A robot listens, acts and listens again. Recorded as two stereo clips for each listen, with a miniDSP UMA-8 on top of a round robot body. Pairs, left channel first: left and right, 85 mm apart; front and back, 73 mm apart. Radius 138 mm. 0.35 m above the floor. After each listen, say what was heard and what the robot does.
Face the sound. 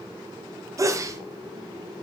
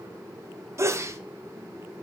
The sneeze: 135° right. Turn 135° right.
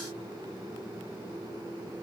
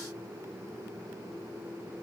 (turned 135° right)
Facing where the sneeze came from. I can't hear it now.